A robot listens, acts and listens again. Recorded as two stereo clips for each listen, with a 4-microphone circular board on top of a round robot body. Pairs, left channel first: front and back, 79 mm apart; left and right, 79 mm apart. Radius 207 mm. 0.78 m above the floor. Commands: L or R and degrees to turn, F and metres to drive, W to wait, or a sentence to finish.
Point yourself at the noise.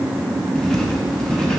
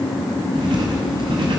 R85
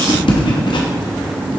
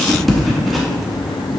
Found it: writing, straight ahead, under 1 m away.